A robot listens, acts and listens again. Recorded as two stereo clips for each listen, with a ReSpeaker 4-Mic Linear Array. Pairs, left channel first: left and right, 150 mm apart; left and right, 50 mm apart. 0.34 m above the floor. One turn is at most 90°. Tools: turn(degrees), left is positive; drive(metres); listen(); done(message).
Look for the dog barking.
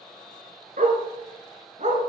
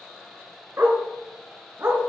turn(degrees=-55)
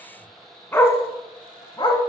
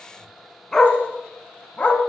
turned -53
turn(degrees=35)
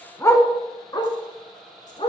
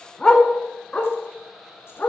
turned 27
turn(degrees=40)
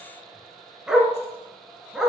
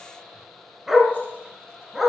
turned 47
done("Found it: a dog barking, straight ahead.")